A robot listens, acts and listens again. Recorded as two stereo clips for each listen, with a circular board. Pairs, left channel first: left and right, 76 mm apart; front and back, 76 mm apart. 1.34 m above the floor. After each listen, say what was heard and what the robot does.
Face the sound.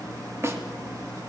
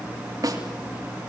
The snare drum: 145° right. Turn 145° right.
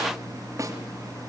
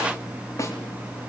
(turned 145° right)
The snare drum is now 45° right. Turn 45° right.
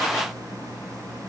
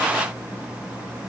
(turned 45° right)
Keep listening.
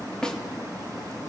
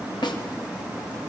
The snare drum is now 10° left. Turn 10° left.
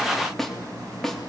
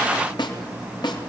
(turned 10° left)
Facing the snare drum, 2 to 4 m away.